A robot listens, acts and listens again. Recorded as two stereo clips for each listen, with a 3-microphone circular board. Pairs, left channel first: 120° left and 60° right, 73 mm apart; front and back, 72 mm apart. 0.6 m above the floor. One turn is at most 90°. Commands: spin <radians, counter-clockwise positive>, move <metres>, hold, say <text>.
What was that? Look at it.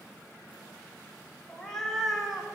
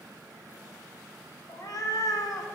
spin 0.44
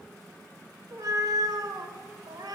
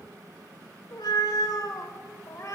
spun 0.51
spin -0.79
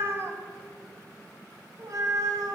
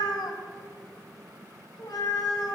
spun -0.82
spin -0.44
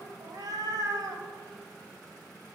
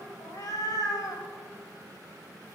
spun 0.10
spin -0.61
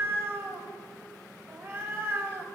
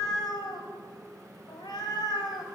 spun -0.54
say Facing the cat meowing, 1 to 2 m away.